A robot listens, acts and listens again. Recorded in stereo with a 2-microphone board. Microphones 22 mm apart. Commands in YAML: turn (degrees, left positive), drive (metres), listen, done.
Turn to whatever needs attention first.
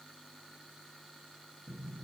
listen: true
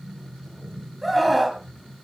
turn: 30
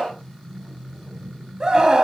turn: -30
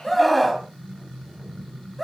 done: "Found it: a scream, straight ahead, 2 to 4 m away."